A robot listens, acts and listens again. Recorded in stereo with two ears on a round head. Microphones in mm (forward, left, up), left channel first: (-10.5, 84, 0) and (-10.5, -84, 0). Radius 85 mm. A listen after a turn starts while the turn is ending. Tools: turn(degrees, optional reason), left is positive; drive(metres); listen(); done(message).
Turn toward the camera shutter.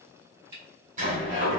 turn(degrees=-60, reason="The camera shutter: about 60° right or 120° right.")
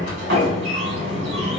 listen()
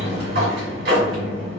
listen()
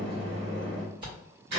turn(degrees=-30, reason="So it is at 30° right.")
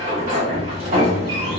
listen()
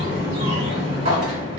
listen()
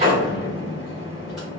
done("Facing where the camera shutter came from. I can't hear it now.")